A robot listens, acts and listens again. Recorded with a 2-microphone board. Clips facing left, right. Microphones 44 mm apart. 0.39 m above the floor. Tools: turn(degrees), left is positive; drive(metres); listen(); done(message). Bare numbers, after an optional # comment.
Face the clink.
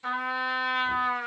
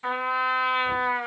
listen()
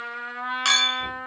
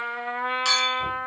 # The clink: about 55° left or 125° left.
turn(55)
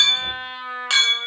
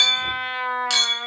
# So it is at 40° left.
turn(40)
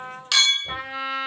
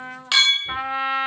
# The clink is now 20° right.
turn(-20)
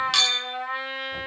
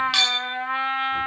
done("Found it: a clink, straight ahead.")